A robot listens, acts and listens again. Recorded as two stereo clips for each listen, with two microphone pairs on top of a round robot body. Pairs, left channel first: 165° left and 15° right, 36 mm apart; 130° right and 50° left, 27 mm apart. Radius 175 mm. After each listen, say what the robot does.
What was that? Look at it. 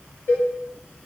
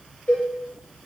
Turn 160° right.
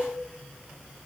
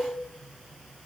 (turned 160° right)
Keep listening.
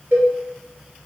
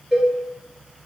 Turn 30° right.
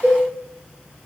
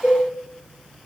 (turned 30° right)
Found it: a cowbell, straight ahead, 2 to 4 m away.